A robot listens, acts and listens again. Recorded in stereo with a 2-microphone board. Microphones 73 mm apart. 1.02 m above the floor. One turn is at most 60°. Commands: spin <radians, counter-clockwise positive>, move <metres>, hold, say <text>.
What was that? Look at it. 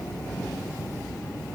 hold
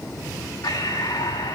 spin 1.05
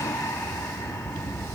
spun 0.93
spin 0.61
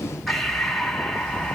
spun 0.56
say Found it: breathing, straight ahead.